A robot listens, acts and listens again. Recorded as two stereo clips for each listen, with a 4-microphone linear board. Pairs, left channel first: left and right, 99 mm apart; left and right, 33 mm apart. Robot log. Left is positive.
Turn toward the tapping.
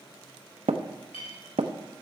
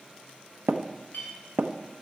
cmd yaw -90
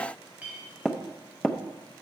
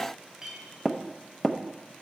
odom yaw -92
end: Facing the tapping.